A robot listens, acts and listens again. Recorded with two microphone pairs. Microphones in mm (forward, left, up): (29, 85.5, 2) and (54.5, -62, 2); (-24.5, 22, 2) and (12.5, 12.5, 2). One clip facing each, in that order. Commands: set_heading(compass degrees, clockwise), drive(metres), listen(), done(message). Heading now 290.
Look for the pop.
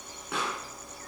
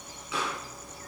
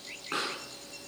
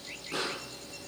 set_heading(160)
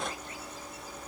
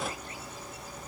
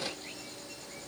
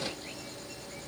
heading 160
done("Facing where the pop came from. I can't hear it now.")